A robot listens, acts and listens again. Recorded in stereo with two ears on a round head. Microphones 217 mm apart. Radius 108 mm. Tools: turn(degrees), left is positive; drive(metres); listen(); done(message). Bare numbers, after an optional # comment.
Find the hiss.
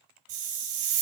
# The hiss: about 45° right or 135° right.
turn(-45)
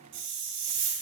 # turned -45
# So it is at 90° right.
turn(-90)
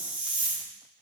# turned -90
done("Facing the hiss, 1 to 2 m away.")